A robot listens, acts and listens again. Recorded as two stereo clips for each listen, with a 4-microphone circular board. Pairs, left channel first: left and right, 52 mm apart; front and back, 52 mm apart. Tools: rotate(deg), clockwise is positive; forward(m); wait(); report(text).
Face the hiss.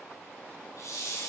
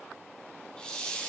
rotate(-75)
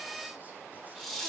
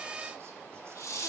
report("Facing the hiss, 1 to 2 m away.")